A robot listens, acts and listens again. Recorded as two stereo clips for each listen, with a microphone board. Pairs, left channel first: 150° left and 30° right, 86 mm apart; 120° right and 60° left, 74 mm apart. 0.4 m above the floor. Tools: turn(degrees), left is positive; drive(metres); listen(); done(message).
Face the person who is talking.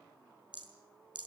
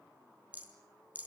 listen()
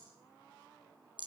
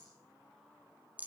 listen()
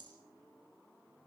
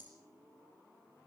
done("I can't make out anyone speaking, only a rattle.")